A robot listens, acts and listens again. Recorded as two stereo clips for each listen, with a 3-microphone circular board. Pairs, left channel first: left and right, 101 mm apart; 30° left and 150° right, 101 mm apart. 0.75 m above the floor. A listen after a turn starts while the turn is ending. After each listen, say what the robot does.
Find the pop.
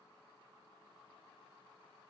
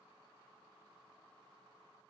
Keep listening.
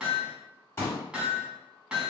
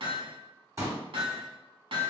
Turn 155° left.
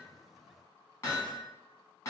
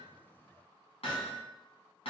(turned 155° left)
Facing where the pop came from. I can't hear it now.